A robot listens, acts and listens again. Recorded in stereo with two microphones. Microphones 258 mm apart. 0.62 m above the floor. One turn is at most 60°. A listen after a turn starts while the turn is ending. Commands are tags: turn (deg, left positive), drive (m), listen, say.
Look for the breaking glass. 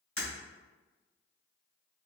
<turn deg="55"/>
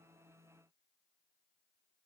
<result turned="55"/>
<listen/>
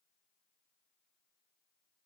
<say>I heard breaking glass, but can't make it out now. It was about straight ahead or 70° left.</say>